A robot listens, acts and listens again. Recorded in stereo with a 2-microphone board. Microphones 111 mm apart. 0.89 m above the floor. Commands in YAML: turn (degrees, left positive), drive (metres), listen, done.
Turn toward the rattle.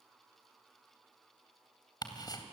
listen: true
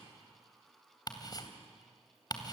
listen: true
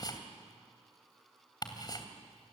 done: "I can't make out a rattle, only ticking."